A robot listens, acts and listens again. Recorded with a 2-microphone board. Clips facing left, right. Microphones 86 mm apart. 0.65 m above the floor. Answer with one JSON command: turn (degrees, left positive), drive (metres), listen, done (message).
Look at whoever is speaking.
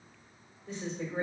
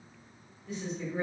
{"turn": 30}
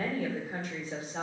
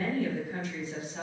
{"turn": 115}
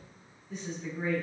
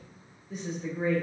{"done": "Found it: a woman speaking, straight ahead, 1 to 2 m away."}